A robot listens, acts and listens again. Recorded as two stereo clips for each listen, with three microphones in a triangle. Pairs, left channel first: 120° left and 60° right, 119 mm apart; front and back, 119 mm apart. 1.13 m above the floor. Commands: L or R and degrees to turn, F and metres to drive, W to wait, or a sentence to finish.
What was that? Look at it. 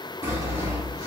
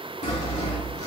Facing the sawing.